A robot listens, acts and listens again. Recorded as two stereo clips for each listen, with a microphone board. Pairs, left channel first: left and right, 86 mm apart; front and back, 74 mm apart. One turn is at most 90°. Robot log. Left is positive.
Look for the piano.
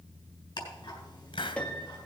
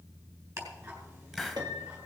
note: The piano: 165° left.
cmd yaw +90
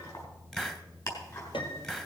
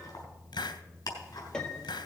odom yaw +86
note: The piano is now 80° left.
cmd yaw +80
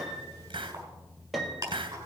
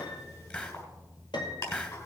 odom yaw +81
end: Facing the piano.